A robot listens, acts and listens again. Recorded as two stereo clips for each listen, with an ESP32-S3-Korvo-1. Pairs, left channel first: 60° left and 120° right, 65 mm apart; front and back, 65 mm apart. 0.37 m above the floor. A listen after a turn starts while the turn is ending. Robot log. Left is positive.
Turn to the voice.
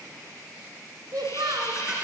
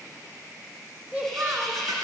note: The child speaking: 120° right.
cmd yaw -120
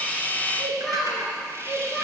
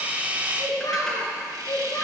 note: The child speaking is now 30° right.
cmd yaw -30
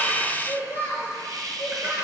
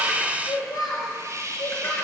note: The child speaking is now 10° right.
cmd yaw -10
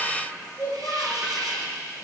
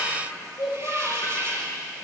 end: Facing the child speaking.